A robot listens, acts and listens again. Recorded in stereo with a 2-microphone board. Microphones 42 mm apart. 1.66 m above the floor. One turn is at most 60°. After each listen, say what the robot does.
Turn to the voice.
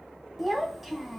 Turn 30° right.
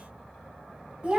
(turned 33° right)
Turn 60° right.
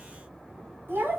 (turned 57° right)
Turn 60° right.
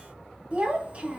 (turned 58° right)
Turn 30° right.
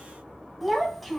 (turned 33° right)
Facing the child speaking.